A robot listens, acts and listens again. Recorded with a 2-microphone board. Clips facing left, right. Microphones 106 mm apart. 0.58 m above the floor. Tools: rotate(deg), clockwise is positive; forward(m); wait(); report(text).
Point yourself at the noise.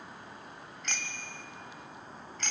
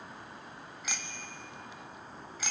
rotate(30)
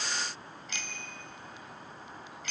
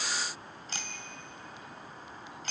rotate(140)
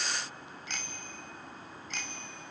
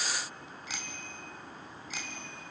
report("Found it: a bicycle bell, straight ahead, 2 to 4 m away.")